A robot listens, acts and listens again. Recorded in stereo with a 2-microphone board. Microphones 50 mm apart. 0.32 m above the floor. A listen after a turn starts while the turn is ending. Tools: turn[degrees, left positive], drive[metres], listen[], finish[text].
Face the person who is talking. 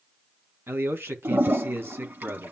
Thought: The man speaking: about 55° right or 125° right.
Action: turn[-55]
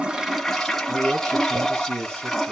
Thought: So it is at 65° right.
Action: turn[-65]
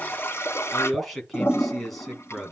Action: finish[Facing the man speaking.]